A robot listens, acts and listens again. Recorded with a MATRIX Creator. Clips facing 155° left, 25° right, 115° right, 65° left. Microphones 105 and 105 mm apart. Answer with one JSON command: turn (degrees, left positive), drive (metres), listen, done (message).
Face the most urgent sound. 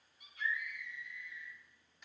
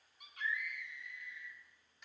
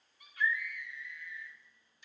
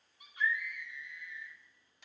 {"done": "Facing the scream, 2 to 4 m away."}